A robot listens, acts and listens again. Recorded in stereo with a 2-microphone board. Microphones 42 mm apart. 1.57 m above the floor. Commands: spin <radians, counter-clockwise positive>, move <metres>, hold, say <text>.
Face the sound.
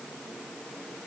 hold
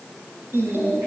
spin -1.57
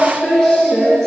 spin 0.17
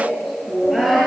say Facing the singing.